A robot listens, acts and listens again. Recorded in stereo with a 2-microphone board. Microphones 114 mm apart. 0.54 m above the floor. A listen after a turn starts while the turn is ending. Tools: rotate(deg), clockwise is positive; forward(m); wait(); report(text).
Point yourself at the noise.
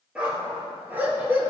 rotate(20)
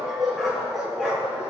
rotate(30)
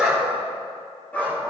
rotate(-15)
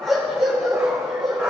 rotate(10)
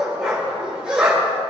report("Facing the dog barking, over 4 m away.")